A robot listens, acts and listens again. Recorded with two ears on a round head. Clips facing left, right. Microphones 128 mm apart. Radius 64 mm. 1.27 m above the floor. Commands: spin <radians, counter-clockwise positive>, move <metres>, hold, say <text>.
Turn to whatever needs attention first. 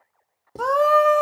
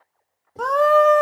spin 0.52
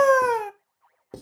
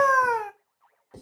spin 2.53
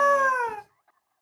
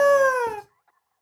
spin -0.70
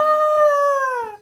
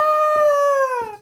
spin -0.17
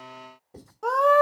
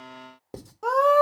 say Facing the scream.